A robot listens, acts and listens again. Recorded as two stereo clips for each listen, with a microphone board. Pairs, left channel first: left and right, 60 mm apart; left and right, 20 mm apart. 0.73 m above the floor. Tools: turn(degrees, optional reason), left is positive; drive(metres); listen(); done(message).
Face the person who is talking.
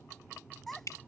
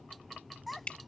turn(degrees=30)
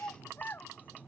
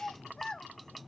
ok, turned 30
turn(degrees=145, reason="So it is at 145° left.")
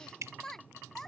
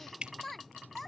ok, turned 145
done("Found it: a child speaking, straight ahead.")